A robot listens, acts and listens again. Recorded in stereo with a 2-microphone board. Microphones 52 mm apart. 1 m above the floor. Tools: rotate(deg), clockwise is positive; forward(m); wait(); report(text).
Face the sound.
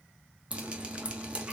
rotate(20)
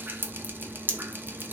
rotate(140)
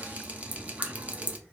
rotate(30)
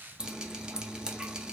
rotate(20)
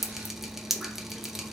rotate(10)
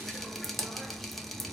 report("Found it: dripping, straight ahead, under 1 m away.")